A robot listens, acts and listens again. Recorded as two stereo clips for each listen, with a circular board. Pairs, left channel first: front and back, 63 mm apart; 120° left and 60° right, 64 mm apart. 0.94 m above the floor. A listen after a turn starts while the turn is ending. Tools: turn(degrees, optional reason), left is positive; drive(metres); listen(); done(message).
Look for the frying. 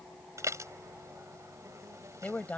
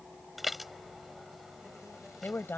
listen()
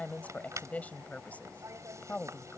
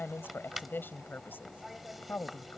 listen()
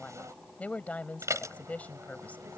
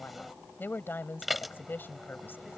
done("I can't make out frying, only a woman speaking and dishes clattering.")